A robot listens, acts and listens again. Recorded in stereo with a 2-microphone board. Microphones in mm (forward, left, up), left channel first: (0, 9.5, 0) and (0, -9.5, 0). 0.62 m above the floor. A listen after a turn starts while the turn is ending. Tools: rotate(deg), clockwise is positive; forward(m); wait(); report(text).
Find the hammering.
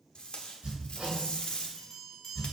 rotate(60)
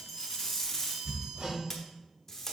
rotate(55)
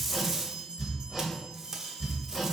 report("Found it: hammering, straight ahead, 2 to 4 m away.")